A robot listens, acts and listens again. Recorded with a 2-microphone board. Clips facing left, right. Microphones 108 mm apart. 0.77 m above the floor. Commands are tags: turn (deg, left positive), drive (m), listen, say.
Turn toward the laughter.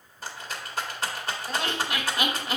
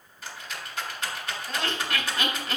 <turn deg="30"/>
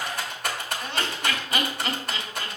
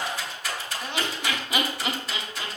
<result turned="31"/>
<turn deg="-15"/>
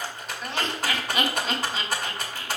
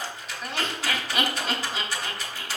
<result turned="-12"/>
<say>Found it: laughter, straight ahead.</say>